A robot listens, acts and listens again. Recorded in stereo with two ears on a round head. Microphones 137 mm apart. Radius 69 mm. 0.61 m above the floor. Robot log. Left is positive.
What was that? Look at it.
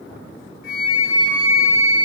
note: The flute: about 65° left or 115° left.
cmd yaw +65
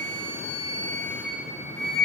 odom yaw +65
note: So it is at 10° left.
cmd yaw +10
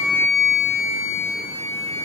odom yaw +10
end: Found it: a flute, straight ahead, 2 to 4 m away.